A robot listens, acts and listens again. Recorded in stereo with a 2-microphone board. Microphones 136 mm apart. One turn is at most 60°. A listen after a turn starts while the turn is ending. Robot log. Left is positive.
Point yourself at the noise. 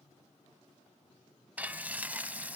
cmd yaw -30
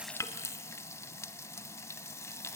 note: So it is at 20° left.
cmd yaw +20
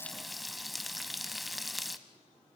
end: Found it: frying, straight ahead, under 1 m away.